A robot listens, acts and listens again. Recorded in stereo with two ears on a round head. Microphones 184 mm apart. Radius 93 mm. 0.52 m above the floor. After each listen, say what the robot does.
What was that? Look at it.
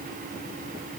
Keep listening.
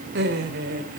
Turn 55° right.
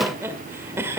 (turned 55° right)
Turn 15° right.
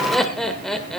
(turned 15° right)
Facing the laughter.